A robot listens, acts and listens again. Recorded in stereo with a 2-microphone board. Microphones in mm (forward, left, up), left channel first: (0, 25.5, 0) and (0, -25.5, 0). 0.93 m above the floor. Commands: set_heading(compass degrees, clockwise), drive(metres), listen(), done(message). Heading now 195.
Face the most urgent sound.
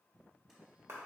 listen()
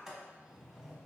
listen()
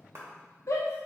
set_heading(105)
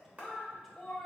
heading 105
done("Found it: a shout, straight ahead, under 1 m away.")